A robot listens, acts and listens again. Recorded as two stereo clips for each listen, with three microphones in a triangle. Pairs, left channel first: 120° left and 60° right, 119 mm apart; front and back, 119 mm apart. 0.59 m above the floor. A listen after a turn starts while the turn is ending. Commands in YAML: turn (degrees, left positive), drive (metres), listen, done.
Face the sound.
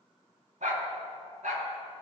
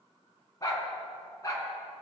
turn: -65
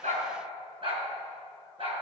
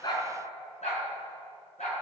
turn: -20
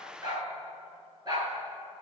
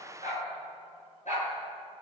done: "Found it: a dog barking, straight ahead, over 4 m away."